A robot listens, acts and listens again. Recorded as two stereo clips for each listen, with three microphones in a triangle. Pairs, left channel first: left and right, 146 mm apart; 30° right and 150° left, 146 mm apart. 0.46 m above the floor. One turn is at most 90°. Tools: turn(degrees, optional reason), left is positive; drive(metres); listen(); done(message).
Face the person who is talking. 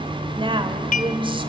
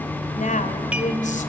turn(degrees=-40, reason="The woman speaking: 40° right.")
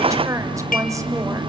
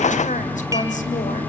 turn(degrees=-25, reason="The woman speaking is now 25° right.")
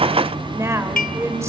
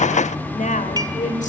turn(degrees=-20, reason="The woman speaking is now 20° right.")
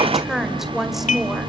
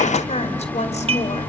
done("Found it: a woman speaking, straight ahead.")